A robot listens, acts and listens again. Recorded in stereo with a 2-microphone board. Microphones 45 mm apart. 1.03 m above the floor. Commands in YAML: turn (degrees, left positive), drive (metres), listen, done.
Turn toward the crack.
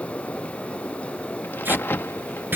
turn: 55
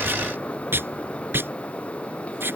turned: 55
listen: true
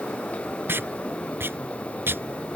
done: "I heard a crack, but can't make it out now. It was about straight ahead or 70° left."